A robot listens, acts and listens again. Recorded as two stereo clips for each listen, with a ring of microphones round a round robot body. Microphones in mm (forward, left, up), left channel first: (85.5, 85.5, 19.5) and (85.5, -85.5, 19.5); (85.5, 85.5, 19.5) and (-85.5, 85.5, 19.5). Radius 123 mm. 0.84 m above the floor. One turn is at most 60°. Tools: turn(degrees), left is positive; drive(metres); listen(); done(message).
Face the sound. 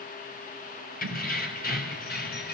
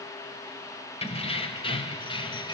turn(degrees=60)
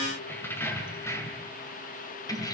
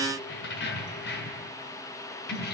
turn(degrees=20)
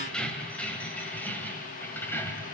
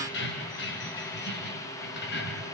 turn(degrees=10)
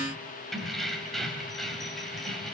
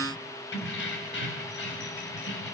done("Found it: keys jangling, straight ahead.")